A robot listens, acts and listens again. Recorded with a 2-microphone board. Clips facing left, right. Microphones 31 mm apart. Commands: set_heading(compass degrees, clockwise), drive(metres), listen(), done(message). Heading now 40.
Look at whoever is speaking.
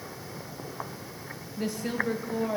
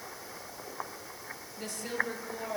set_heading(10)
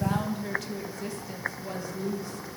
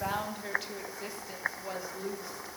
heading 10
set_heading(20)
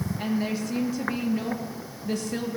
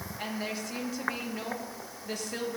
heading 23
done("Found it: a woman speaking, straight ahead.")